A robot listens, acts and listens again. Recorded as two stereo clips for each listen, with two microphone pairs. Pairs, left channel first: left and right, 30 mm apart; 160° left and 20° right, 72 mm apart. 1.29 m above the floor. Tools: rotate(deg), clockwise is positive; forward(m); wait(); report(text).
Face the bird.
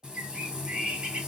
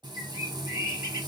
rotate(70)
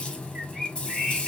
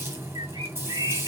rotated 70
rotate(10)
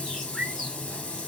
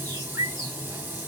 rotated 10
report("Found it: a bird, straight ahead.")